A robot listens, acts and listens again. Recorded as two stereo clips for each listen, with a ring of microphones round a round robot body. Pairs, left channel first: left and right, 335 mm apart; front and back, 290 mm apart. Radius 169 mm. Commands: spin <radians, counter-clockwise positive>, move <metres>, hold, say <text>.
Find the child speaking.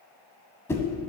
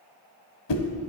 hold
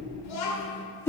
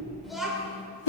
spin 1.66
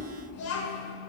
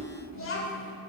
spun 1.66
spin 0.79
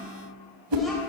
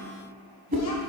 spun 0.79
hold
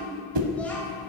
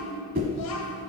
hold
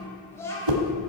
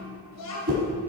spin 0.17
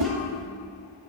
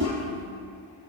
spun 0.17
hold
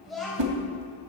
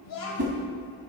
say Facing the child speaking.